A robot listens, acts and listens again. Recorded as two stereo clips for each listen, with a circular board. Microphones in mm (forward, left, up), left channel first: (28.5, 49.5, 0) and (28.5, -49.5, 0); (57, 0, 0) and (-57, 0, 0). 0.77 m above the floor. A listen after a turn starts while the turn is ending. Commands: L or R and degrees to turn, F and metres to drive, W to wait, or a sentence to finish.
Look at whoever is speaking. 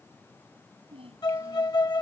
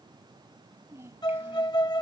R110
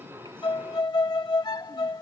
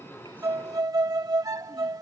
W
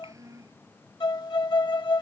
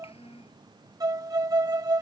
R30
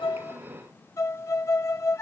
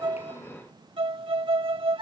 W
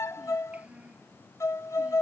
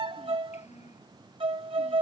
R10
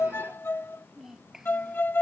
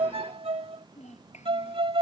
Facing the child speaking.